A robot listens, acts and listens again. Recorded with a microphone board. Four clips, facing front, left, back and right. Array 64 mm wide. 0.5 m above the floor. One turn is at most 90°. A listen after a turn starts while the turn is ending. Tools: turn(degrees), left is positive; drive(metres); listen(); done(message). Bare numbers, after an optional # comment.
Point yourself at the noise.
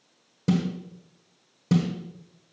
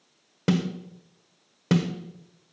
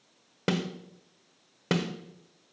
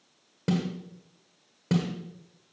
# The snare drum: 155° left.
turn(90)
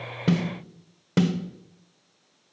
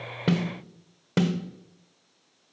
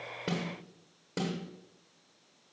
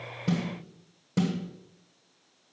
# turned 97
# The snare drum is now 55° left.
turn(55)
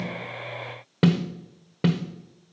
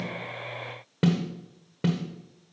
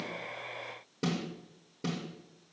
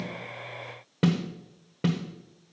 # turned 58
done("Found it: a snare drum, straight ahead, 1 to 2 m away.")